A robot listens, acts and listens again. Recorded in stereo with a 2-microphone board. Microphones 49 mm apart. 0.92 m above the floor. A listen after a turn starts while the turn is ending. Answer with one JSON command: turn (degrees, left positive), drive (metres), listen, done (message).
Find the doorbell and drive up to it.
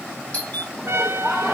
{"turn": 35}
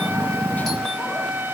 {"listen": true}
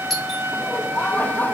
{"drive": 1.0}
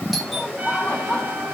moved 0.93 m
{"listen": true}
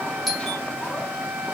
{"drive": 1.0}
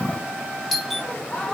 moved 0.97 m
{"drive": 1.0}
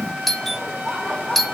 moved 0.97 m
{"drive": 1.0}
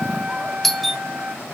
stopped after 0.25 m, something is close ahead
{"done": "Arrived at the doorbell, straight ahead."}